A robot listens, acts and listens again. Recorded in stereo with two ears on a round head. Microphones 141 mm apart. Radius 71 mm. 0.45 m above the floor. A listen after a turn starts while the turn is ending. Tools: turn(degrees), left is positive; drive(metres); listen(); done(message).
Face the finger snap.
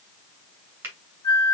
turn(degrees=-30)
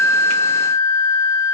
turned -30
listen()
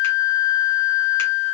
listen()
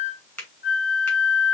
turn(degrees=15)
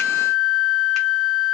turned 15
listen()
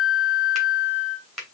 done("Found it: a finger snap, straight ahead, 2 to 4 m away.")